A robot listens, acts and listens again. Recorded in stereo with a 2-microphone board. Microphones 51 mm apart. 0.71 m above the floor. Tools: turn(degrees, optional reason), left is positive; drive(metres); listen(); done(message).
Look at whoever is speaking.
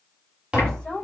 turn(degrees=25, reason="The woman speaking: about 25° left or 155° left.")
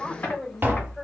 done("Found it: a woman speaking, straight ahead, 2 to 4 m away.")